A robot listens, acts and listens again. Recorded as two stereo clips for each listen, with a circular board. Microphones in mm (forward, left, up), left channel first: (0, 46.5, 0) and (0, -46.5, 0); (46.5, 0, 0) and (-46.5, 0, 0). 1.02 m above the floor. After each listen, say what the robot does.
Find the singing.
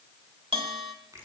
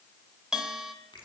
Keep listening.
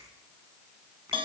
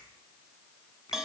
Keep listening.
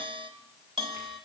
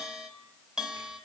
I can't make out singing, only a bell and a finger snap.